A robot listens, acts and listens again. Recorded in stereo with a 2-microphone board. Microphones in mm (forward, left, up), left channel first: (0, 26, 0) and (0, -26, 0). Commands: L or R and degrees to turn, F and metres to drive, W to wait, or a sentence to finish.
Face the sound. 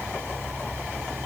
W
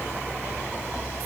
W
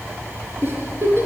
R45
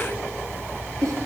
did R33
R100
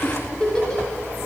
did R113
L15
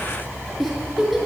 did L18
Facing the giggle, over 4 m away.